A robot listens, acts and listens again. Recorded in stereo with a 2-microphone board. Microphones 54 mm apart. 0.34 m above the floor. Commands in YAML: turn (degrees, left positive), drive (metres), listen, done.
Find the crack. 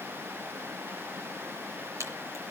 turn: -65
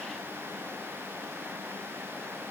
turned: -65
listen: true
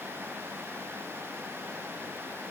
done: "I heard a crack, but can't make it out now. It was about straight ahead or 50° right."